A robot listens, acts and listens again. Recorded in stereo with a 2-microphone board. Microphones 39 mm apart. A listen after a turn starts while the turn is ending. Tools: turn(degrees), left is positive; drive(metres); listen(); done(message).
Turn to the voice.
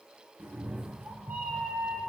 listen()
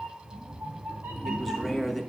turn(degrees=30)
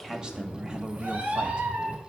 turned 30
listen()
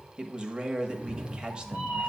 turn(degrees=-25)
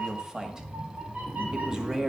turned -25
turn(degrees=-15)
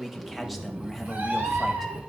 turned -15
listen()
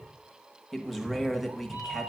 done("Facing the man speaking.")